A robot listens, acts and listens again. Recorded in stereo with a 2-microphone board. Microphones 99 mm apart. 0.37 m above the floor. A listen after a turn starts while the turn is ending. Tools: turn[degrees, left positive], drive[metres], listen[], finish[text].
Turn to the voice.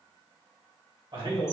Thought: The man speaking: about 65° right or 115° right.
Action: turn[-65]
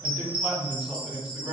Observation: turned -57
Thought: So it is at 20° right.
Action: turn[-20]
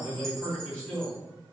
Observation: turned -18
Action: finish[Found it: a man speaking, straight ahead.]